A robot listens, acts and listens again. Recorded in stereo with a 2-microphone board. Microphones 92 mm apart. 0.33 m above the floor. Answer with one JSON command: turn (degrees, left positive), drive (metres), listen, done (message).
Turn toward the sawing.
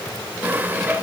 {"turn": -20}
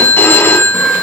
{"listen": true}
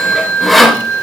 {"done": "Facing the sawing, 1 to 2 m away."}